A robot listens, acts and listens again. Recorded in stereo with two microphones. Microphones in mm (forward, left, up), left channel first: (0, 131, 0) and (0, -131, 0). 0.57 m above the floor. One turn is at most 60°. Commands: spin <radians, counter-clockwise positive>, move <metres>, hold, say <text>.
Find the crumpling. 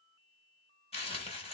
spin 0.35
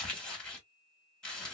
say Found it: crumpling, straight ahead.